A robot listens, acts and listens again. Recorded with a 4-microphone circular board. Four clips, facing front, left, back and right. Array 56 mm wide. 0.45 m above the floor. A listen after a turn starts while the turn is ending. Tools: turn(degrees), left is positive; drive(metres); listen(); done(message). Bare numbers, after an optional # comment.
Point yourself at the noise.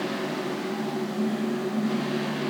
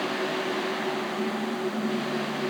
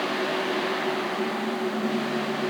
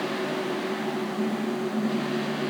listen()
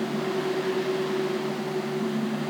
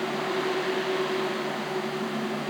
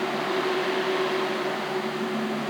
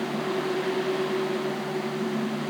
listen()
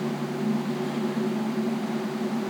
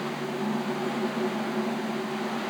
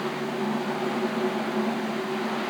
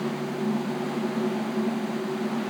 done("I can't make out anything.")